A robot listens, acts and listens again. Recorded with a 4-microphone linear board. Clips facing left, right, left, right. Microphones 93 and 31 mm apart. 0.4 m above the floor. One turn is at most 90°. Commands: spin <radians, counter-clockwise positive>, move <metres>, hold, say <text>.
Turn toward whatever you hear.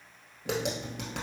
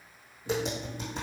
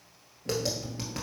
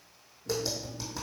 spin 1.57
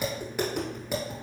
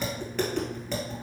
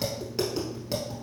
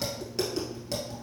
spin 0.17
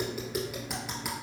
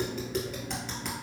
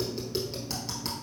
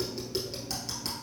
say Facing the tapping, 1 to 2 m away.